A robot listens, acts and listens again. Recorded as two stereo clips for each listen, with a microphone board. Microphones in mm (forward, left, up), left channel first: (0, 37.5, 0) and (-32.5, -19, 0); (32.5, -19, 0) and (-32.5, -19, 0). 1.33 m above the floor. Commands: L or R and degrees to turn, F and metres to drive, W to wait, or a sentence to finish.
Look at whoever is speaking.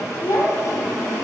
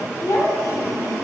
L35
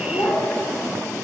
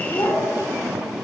L10
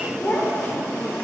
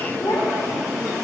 Found it: a child speaking, straight ahead, 2 to 4 m away.